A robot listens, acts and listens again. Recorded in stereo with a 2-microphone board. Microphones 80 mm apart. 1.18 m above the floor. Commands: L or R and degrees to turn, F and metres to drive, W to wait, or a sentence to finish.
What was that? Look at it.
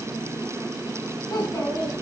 L45
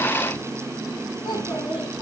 L85
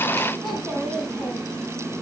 Facing the child speaking, over 4 m away.